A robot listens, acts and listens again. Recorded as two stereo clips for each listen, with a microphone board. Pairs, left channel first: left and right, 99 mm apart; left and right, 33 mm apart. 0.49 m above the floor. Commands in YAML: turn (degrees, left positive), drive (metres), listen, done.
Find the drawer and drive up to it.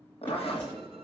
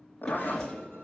turn: 20
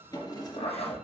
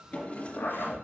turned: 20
turn: 140
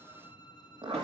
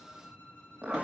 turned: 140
listen: true
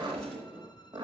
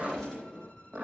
drive: 1.0
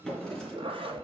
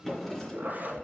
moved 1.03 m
drive: 1.0
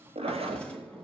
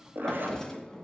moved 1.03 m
turn: 10
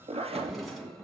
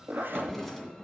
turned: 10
drive: 1.0
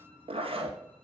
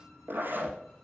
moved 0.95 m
listen: true
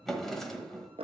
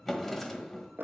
drive: 1.0
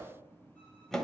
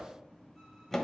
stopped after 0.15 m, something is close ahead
done: "I am next to the drawer."